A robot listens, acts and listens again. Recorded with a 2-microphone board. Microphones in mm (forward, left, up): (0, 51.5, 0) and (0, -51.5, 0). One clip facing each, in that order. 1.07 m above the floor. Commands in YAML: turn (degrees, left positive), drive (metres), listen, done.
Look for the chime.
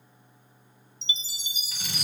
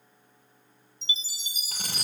turn: -40
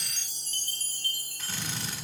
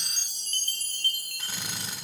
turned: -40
turn: -95
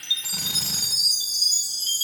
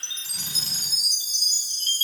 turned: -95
turn: 10
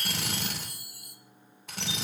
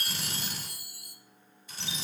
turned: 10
done: "Found it: a chime, straight ahead, 1 to 2 m away."